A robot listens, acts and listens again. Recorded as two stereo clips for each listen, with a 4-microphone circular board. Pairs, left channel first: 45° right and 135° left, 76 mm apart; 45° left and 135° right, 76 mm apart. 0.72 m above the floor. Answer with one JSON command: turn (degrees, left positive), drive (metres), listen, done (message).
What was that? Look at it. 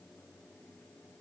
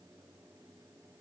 {"listen": true}
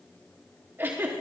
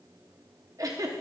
{"turn": -165}
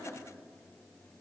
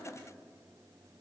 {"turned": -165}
{"done": "Found it: a giggle, straight ahead, under 1 m away."}